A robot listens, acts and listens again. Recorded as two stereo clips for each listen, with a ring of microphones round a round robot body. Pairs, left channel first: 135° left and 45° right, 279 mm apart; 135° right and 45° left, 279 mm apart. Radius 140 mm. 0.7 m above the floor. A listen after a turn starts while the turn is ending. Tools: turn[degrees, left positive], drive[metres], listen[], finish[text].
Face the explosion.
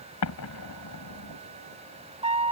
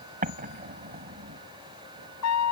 Thought: The explosion: 105° left.
Action: turn[105]
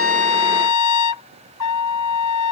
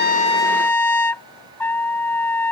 Action: finish[I heard an explosion from this way, but can't make it out now.]